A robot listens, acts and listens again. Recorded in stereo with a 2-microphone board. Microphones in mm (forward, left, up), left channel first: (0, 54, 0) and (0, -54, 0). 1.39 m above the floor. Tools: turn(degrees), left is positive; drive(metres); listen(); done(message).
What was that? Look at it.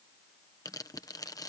turn(degrees=35)
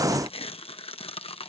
turn(degrees=105)
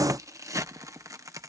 turn(degrees=-35)
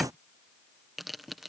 done("Facing the tearing paper.")